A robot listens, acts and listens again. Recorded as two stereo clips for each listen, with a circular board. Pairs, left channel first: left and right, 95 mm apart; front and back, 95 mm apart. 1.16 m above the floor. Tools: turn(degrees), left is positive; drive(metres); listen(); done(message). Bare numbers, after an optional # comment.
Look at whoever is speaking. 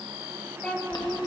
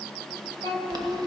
# The child speaking: 165° left.
turn(165)
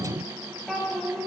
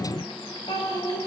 done("Found it: a child speaking, straight ahead, 2 to 4 m away.")